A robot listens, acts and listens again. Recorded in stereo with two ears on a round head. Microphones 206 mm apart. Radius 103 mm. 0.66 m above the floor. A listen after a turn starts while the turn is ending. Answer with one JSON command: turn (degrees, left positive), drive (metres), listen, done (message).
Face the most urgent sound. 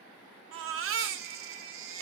{"turn": -60}
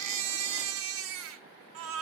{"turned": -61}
{"turn": -60}
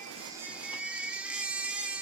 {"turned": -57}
{"done": "Found it: a baby crying, straight ahead, under 1 m away."}